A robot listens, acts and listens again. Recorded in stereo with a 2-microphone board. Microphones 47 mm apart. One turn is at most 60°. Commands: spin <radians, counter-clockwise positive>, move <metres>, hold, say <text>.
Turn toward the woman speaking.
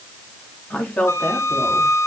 spin 0.52
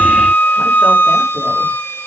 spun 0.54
hold
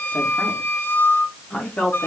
spin 0.52
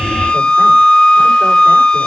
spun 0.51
hold
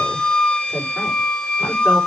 hold
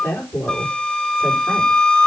spin 1.05
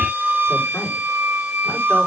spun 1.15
spin 0.96
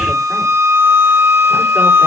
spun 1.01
hold
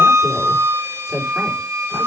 say Facing the woman speaking, over 4 m away.